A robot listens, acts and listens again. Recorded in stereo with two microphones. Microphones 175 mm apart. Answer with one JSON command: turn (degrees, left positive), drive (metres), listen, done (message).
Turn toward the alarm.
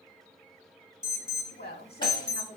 {"turn": -40}
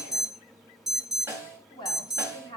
{"done": "Found it: an alarm, straight ahead, under 1 m away."}